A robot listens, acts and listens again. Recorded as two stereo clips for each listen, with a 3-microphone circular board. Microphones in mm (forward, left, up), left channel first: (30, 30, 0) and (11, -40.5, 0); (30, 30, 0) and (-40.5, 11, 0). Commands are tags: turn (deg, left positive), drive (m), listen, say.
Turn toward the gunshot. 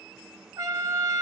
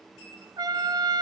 <listen/>
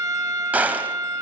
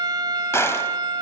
<turn deg="-35"/>
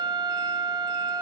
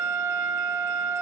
<say>I heard a gunshot from this way, but can't make it out now.</say>